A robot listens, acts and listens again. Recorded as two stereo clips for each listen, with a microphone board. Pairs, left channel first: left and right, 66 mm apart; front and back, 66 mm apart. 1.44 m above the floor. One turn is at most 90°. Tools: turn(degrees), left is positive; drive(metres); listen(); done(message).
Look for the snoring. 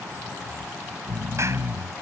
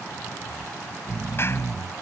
turn(degrees=-90)
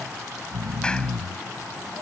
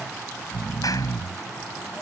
turn(degrees=-90)
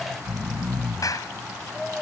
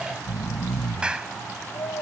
done("Found it: snoring, straight ahead.")